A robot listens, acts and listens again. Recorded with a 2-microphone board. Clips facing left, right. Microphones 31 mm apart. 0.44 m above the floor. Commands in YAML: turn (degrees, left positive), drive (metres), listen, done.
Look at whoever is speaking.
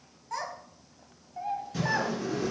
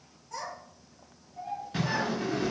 turn: 90
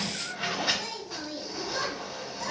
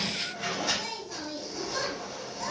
done: "Found it: a child speaking, straight ahead."